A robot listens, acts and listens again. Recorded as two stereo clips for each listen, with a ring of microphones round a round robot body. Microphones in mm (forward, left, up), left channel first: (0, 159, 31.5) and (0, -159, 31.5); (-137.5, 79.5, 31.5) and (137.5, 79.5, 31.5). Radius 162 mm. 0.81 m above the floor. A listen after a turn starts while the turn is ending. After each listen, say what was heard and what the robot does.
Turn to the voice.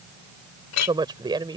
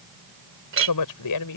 The woman speaking: 165° right. Turn 165° right.
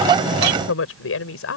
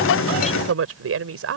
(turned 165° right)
The woman speaking is now 40° left. Turn 40° left.
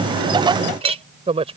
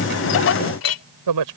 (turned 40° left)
The woman speaking is now 15° right. Turn 15° right.
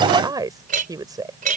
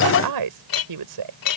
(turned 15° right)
The woman speaking is now 10° right. Turn 10° right.
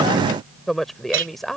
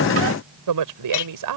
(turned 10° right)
Facing the woman speaking.